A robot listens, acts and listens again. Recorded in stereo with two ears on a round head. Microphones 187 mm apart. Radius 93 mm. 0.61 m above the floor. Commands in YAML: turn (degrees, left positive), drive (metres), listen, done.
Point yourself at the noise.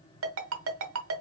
turn: -70
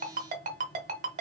turn: -35
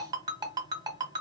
turn: -20
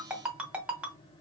done: "Found it: a ringtone, straight ahead, 1 to 2 m away."